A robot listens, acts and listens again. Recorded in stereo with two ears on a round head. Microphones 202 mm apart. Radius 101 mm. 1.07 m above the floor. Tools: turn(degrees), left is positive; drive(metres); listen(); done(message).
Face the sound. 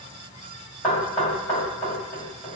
turn(degrees=30)
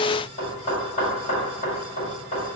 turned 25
turn(degrees=150)
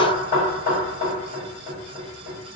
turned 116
turn(degrees=35)
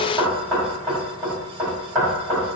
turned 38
done("Facing the knocking.")